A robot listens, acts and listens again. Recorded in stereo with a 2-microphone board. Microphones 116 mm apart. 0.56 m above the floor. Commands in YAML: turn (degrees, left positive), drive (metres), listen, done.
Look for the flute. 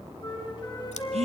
turn: 40
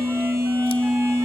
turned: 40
listen: true
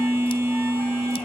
listen: true
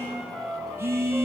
done: "Found it: a flute, straight ahead."